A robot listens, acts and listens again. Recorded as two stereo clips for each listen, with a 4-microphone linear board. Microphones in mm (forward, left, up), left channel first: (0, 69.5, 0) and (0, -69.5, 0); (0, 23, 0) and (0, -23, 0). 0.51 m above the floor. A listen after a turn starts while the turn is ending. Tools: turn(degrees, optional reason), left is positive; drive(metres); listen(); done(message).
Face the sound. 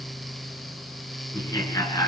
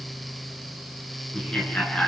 turn(degrees=25, reason="The laughter: about 25° left or 155° left.")
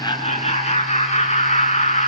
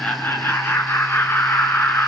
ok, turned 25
turn(degrees=125, reason="So it is at 125° left.")
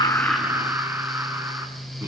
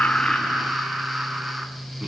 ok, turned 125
turn(degrees=-15, reason="The laughter is now 15° right.")
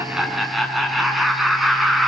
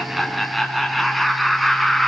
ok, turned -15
done("Found it: laughter, straight ahead, over 4 m away.")